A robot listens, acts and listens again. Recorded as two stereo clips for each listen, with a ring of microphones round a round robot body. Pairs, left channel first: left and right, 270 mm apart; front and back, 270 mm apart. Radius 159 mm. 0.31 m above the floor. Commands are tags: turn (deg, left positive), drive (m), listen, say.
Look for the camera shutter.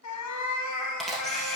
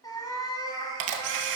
<turn deg="180"/>
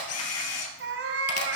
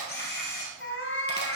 <turn deg="60"/>
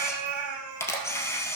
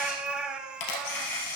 <turn deg="10"/>
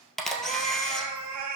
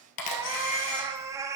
<say>Facing the camera shutter.</say>